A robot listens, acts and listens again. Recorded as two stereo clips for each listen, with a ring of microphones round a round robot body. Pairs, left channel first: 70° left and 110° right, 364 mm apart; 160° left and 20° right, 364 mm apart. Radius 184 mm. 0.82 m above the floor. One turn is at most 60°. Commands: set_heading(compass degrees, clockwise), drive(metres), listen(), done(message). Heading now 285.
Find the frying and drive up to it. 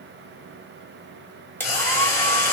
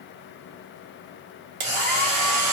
set_heading(265)
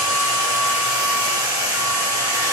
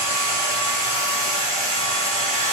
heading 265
listen()
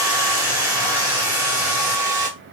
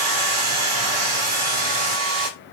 listen()
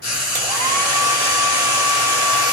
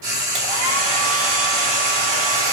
drive(1.0)
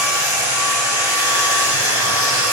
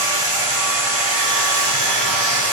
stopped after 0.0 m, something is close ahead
listen()
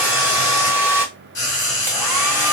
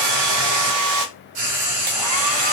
done("Blocked. The frying is further on, straight ahead.")